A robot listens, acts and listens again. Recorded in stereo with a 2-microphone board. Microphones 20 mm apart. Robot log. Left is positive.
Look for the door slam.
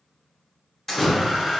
note: The door slam: about 25° left or 155° left.
cmd yaw +25
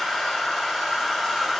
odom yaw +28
cmd idle
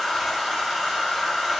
end: I heard a door slam, but can't make it out now. It was about straight ahead or 125° left.